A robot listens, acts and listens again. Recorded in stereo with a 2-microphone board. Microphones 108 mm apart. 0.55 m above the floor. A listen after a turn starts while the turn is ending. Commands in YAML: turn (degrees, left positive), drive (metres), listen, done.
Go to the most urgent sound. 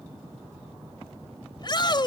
turn: 40
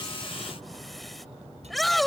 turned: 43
drive: 1.0
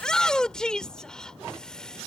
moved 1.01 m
turn: 10
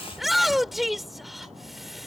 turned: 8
drive: 1.0
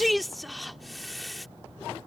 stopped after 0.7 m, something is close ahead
done: "Arrived at the shout, straight ahead."